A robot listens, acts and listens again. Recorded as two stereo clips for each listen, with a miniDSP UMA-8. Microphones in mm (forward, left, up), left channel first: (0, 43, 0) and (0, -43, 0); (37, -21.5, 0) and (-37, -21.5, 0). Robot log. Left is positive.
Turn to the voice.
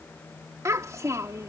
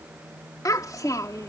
note: The child speaking: 40° right.
cmd yaw -40
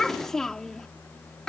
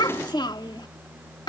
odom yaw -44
end: Facing the child speaking.